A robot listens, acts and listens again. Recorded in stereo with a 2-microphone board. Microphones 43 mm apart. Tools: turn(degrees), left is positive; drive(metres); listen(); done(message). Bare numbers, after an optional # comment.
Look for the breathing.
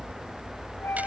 listen()
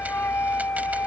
listen()
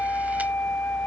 done("I can't make out breathing, only a flute.")